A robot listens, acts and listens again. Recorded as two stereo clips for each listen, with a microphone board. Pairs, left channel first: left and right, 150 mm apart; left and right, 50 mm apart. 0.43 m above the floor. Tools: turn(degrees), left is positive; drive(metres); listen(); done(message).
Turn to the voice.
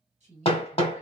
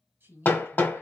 turn(degrees=-50)
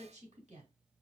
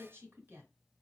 turn(degrees=-65)
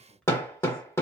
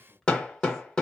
listen()
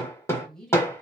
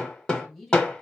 done("Facing the woman speaking, 1 to 2 m away.")